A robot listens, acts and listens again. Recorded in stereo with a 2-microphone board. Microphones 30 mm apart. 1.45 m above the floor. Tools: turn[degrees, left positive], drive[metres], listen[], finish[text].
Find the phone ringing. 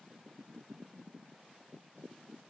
Action: listen[]
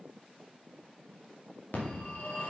Thought: The phone ringing: about 60° left or 120° left.
Action: turn[60]
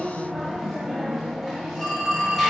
Action: finish[Facing the phone ringing, 2 to 4 m away.]